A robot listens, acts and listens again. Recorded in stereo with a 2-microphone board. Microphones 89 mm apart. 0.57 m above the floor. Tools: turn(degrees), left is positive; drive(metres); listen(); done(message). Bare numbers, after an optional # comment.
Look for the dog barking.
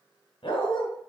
# The dog barking: about 65° left or 115° left.
turn(65)
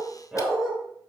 # So it is at 10° right.
turn(-10)
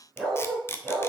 done("Facing the dog barking, 2 to 4 m away.")